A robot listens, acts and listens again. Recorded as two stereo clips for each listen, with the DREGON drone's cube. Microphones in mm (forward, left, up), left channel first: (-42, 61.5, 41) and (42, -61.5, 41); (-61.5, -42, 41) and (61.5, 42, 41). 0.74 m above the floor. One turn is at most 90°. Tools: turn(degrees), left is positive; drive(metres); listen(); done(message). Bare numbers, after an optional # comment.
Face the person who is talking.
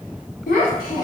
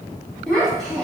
# The child speaking: 130° left.
turn(90)
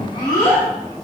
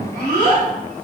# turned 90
# The child speaking is now 60° left.
turn(60)
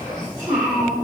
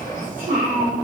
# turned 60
# The child speaking is now 10° left.
turn(10)
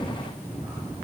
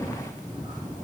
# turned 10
listen()
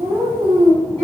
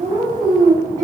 done("Facing the child speaking, under 1 m away.")